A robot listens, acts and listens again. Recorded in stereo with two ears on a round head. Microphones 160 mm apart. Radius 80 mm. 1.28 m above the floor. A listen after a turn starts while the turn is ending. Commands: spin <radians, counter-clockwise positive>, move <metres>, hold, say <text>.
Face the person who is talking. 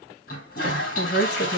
spin 1.22
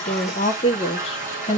spin 0.61
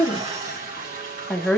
say Facing the woman speaking.